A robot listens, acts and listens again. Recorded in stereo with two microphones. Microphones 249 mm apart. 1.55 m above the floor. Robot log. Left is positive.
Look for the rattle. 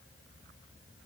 cmd idle
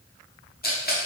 note: The rattle: about 35° left or 145° left.
cmd yaw +35
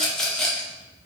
end: Found it: a rattle, straight ahead, under 1 m away.